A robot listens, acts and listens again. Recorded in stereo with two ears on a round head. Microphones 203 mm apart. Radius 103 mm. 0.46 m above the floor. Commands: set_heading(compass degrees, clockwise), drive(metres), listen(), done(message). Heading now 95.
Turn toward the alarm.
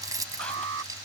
set_heading(150)
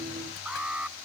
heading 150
done("Facing the alarm.")